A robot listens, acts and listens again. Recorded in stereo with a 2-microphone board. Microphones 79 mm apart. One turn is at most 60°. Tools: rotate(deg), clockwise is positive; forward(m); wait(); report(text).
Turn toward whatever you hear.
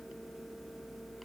wait()
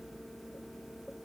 wait()
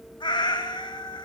rotate(-60)
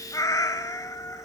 rotate(-45)
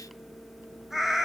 report("Facing the cat meowing, 1 to 2 m away.")